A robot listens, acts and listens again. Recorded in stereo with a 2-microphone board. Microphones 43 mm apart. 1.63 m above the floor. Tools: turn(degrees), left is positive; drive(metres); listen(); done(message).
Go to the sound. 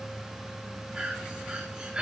turn(degrees=-25)
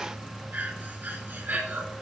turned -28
turn(degrees=-130)
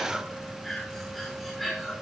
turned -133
drive(metres=1.0)
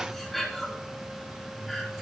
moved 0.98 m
drive(metres=1.0)
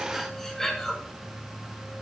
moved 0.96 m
turn(degrees=10)
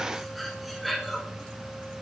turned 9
drive(metres=1.0)
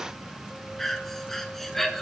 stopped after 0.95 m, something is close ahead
done("I am next to the breathing.")